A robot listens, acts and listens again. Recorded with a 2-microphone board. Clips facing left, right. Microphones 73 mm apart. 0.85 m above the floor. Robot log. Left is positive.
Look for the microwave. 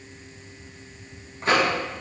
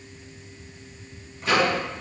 note: The microwave: about 40° left or 140° left.
cmd yaw +40
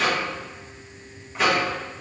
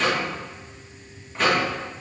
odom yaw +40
end: Facing the microwave.